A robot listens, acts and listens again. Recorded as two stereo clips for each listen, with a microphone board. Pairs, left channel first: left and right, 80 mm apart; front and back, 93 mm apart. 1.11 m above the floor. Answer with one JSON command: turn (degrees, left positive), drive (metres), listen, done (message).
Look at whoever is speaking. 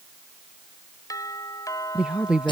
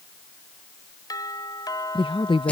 {"turn": -15}
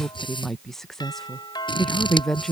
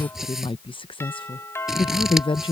{"done": "Found it: a woman speaking, straight ahead."}